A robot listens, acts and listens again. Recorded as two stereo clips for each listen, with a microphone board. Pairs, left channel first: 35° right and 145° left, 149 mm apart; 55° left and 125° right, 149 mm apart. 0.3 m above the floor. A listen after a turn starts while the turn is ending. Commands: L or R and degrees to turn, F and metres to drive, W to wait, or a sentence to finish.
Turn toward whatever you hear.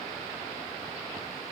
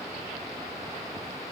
W
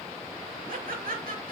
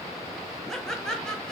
L140
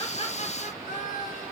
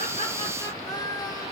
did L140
R10
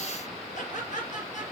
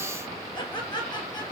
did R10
Found it: laughter, straight ahead.